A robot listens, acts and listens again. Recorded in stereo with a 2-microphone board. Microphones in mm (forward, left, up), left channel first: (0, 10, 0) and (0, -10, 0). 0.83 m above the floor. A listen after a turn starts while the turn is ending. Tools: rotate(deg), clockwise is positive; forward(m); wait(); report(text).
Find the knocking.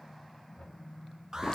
rotate(-50)
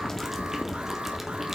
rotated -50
wait()
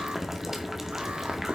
wait()
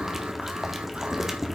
report("I heard knocking, but can't make it out now. It was about straight ahead or 80° left.")